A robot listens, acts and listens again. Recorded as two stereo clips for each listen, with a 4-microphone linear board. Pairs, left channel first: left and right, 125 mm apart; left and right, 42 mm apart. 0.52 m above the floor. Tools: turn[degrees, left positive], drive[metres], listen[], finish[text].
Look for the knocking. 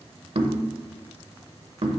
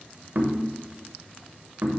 Thought: The knocking: about 50° right or 130° right.
Action: turn[-50]
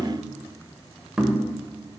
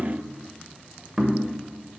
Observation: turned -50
Action: finish[Facing the knocking.]